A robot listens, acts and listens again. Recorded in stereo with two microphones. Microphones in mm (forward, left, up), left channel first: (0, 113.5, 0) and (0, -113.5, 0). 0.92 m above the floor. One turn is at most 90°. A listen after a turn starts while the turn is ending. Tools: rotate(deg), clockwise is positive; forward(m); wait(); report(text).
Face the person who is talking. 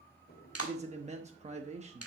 rotate(30)
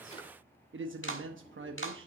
rotate(90)
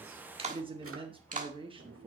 rotate(25)
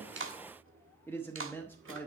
rotate(-10)
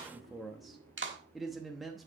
report("Facing the man speaking, under 1 m away.")